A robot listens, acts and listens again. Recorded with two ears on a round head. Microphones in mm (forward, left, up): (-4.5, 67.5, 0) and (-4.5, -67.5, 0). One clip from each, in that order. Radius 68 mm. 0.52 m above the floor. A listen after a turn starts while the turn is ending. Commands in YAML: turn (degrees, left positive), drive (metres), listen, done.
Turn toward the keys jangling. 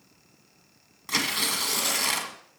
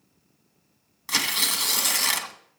listen: true
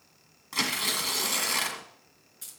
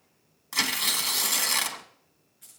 turn: 90
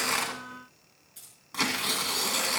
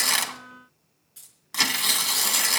turn: -10
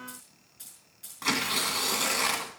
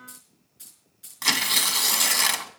done: "Facing the keys jangling."